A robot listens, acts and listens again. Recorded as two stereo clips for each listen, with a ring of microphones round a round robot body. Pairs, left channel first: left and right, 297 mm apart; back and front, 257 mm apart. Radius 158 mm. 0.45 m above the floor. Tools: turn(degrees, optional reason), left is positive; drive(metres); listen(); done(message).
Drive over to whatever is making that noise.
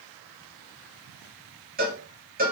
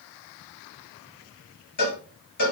turn(degrees=-150, reason="The cowbell: 150° right.")
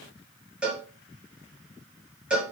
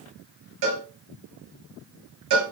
drive(metres=1.0)
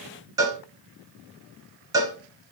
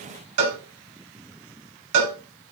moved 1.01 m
turn(degrees=-10, reason="The cowbell is now 10° right.")
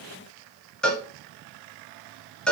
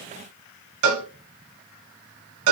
drive(metres=1.0)
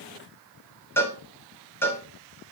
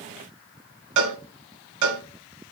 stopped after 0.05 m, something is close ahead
done("Arrived at the cowbell, straight ahead.")